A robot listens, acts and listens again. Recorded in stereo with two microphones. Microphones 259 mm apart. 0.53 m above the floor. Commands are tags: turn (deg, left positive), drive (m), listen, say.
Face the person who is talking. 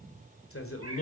<turn deg="55"/>
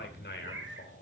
<turn deg="50"/>
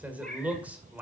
<say>Facing the man speaking, 2 to 4 m away.</say>